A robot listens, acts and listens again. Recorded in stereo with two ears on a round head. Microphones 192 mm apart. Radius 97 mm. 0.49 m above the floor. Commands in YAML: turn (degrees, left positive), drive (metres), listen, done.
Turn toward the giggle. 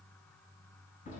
listen: true
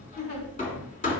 turn: 45
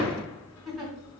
done: "Facing the giggle."